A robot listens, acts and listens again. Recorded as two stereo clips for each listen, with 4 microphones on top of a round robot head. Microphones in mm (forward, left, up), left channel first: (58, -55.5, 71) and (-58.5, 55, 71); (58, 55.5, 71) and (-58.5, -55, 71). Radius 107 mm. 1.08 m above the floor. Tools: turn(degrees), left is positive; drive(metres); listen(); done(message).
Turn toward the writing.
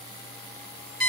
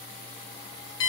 listen()
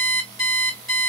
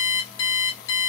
listen()
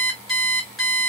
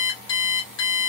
done("I can't make out writing to turn to.")